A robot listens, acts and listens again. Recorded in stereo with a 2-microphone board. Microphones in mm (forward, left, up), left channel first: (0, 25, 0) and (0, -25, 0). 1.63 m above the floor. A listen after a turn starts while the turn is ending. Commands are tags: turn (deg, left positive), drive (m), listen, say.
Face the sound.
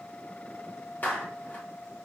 <turn deg="35"/>
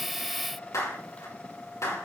<turn deg="110"/>
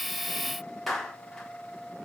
<say>Facing the clap, over 4 m away.</say>